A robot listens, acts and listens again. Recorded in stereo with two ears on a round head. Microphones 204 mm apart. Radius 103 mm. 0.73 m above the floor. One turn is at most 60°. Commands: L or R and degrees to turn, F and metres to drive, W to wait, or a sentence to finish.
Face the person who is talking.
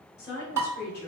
L45
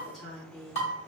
Found it: a woman speaking, straight ahead, 1 to 2 m away.